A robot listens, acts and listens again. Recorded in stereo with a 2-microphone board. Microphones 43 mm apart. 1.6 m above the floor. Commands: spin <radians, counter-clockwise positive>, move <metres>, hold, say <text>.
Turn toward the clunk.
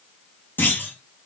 spin 0.79
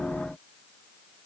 hold
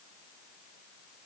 say I heard a clunk, but can't make it out now. It was about straight ahead or 90° left.